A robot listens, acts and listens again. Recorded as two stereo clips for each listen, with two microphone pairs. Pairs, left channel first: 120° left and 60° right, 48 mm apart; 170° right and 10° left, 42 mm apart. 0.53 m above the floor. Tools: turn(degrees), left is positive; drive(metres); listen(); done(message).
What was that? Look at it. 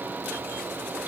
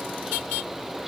listen()
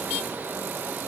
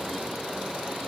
listen()
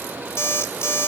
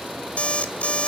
turn(degrees=130)
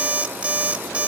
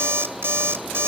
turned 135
done("Found it: an alarm clock, straight ahead, 1 to 2 m away.")